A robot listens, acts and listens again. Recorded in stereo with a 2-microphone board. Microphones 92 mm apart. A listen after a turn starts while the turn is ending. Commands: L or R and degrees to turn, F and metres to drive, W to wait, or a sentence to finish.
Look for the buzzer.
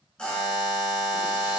L30
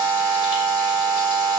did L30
L140
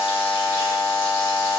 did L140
R15
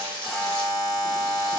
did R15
Found it: a buzzer, straight ahead.